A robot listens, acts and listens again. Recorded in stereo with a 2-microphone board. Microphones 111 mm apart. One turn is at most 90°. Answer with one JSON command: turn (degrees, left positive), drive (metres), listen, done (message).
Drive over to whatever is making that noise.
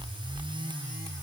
{"listen": true}
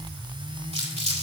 {"turn": -90}
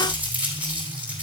{"turn": -15}
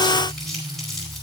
{"drive": 1.0}
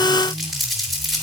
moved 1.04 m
{"drive": 1.0}
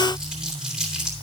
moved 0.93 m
{"drive": 1.0}
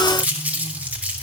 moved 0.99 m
{"turn": -15}
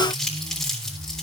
{"drive": 1.0}
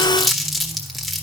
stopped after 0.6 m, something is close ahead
{"done": "Arrived at the crumpling, straight ahead."}